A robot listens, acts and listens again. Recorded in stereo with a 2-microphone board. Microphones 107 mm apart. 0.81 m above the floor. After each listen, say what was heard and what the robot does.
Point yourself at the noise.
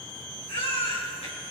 The baby crying: about 70° left or 110° left. Turn 70° left.
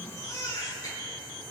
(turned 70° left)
So it is at 35° left. Turn 35° left.
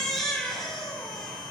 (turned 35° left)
Facing the baby crying.